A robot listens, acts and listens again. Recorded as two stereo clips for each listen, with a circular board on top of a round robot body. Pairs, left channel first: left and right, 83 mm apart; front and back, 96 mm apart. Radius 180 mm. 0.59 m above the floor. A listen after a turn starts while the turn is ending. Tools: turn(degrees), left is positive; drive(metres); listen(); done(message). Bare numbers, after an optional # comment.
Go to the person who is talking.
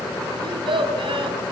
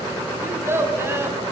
# The child speaking: 115° right.
turn(-115)
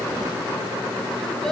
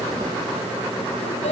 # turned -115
listen()
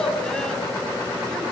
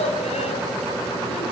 drive(1.0)
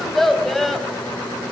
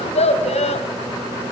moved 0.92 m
drive(1.0)
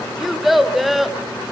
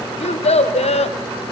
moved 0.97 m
drive(1.0)
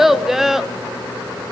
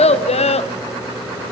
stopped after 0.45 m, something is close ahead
done("Arrived at the child speaking, straight ahead.")